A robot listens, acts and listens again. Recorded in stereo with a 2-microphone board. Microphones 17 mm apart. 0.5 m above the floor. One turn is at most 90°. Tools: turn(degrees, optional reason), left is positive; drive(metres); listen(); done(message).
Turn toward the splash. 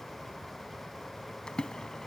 turn(degrees=90)
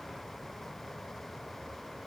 done("I heard a splash from this way, but can't make it out now.")